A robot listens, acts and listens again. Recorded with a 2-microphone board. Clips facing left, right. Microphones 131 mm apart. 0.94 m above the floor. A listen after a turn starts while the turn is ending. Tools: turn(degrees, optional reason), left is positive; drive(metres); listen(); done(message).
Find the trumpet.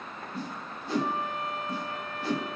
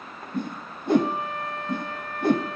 turn(degrees=-65, reason="The trumpet: about 65° right or 115° right.")
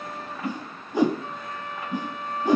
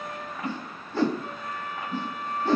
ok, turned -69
turn(degrees=-45, reason="So it is at 45° right.")
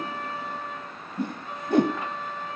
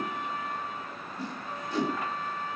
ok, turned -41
done("Facing the trumpet.")